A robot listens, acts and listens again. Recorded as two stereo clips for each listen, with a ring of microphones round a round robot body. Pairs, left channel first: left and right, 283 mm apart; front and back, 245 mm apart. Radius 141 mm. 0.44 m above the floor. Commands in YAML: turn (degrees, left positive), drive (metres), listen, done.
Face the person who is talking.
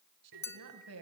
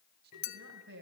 turn: -130
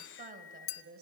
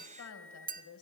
turn: -35
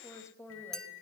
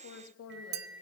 turn: 10
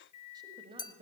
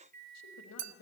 turn: -20
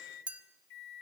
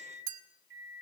listen: true
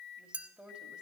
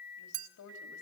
done: "Found it: a woman speaking, straight ahead."